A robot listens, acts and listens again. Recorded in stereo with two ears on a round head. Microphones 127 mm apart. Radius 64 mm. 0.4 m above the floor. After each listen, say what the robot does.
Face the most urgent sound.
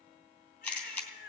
Turn 75° left.
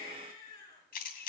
Turn 30° left.
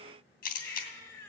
Turn 15° left.
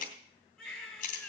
Found it: a baby crying, straight ahead, over 4 m away.